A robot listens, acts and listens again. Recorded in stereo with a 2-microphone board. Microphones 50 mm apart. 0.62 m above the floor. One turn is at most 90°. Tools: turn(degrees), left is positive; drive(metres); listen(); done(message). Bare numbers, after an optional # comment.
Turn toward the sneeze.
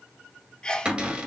# The sneeze: about 15° left or 165° left.
turn(15)
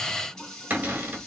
listen()
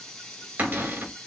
done("I heard a sneeze, but can't make it out now. It was about straight ahead or 150° left.")